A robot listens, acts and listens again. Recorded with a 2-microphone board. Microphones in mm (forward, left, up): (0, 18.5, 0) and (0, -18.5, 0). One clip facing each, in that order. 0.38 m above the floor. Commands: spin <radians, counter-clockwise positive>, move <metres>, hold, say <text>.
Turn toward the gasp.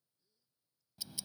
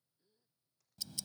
spin -0.52
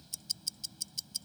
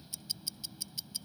hold
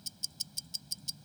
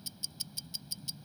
say I heard a gasp, but can't make it out now. It was about straight ahead or 120° right.